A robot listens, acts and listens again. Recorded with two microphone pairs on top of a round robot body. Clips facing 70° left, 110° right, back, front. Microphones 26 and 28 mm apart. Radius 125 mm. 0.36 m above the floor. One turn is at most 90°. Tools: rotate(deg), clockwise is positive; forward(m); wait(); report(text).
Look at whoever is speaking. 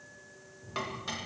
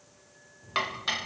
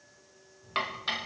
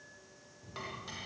rotate(60)
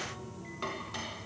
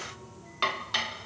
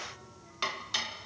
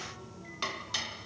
report("Facing the child speaking, over 4 m away.")